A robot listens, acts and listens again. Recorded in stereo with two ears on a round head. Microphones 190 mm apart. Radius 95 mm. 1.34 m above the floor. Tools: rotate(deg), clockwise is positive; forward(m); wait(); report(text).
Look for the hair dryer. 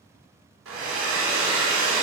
rotate(75)
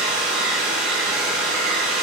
report("Found it: a hair dryer, straight ahead, 2 to 4 m away.")